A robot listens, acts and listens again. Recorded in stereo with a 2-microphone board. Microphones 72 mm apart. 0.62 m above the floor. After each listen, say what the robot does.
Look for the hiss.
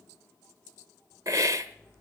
Turn 50° right.
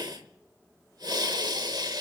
Turn 75° right.
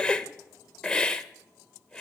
Turn 15° left.
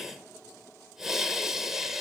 Found it: a hiss, straight ahead.